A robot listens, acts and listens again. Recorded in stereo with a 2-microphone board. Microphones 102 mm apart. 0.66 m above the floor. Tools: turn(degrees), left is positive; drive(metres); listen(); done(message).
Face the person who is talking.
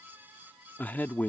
turn(degrees=15)
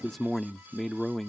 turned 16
done("Facing the man speaking.")